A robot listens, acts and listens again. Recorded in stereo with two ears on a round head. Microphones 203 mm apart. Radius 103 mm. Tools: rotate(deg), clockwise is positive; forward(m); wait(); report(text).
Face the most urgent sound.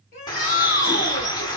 rotate(-45)
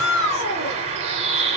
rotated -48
rotate(-85)
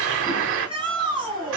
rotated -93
report("Found it: a shout, straight ahead, 2 to 4 m away.")